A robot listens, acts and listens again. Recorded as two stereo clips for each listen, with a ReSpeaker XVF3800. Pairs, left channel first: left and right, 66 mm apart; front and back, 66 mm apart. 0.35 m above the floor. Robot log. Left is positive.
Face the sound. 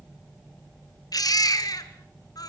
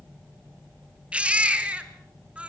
note: The baby crying: 110° left.
cmd yaw +110
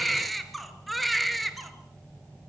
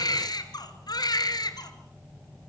end: Found it: a baby crying, straight ahead.